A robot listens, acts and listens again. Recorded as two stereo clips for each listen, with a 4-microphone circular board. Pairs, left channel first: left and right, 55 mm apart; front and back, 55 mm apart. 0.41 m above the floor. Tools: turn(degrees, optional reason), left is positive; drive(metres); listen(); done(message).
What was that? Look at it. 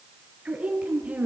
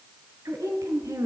turn(degrees=-155, reason="The woman speaking: 155° right.")
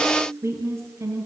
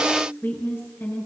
turn(degrees=-50, reason="The woman speaking is now 50° right.")
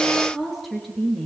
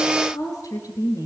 done("Found it: a woman speaking, straight ahead, over 4 m away.")